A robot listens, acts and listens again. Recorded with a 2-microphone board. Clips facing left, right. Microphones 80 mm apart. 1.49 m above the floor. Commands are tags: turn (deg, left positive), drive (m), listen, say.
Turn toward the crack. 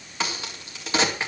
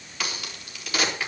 <turn deg="30"/>
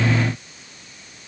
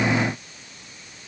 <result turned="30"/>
<listen/>
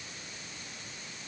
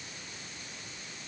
<say>I heard a crack, but can't make it out now. It was about straight ahead or 120° left.</say>